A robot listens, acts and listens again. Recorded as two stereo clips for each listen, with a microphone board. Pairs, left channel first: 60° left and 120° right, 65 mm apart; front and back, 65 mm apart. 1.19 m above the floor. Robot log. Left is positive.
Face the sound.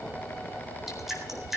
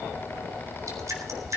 note: The dripping: 155° left.
cmd yaw +155
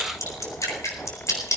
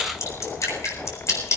note: The dripping is now 30° left.
cmd yaw +30
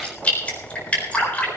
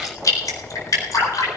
end: Found it: dripping, straight ahead, over 4 m away.